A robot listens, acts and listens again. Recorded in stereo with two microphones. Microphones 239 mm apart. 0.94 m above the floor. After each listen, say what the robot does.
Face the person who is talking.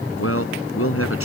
Turn 65° left.
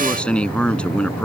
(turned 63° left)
Facing the man speaking.